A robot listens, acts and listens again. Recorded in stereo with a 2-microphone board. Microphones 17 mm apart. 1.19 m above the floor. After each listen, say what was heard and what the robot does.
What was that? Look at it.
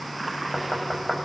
The knocking: about 35° left or 145° left. Turn 35° left.
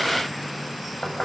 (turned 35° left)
So it is at 115° left. Turn 115° left.
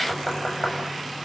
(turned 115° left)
The knocking is now 15° left. Turn 15° left.
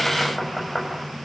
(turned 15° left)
Found it: knocking, straight ahead.